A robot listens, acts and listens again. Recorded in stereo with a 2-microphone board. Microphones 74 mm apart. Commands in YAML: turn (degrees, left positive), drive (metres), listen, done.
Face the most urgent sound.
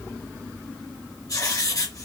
listen: true
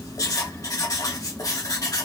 listen: true
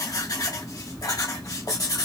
done: "I can't make out anything urgent to turn to."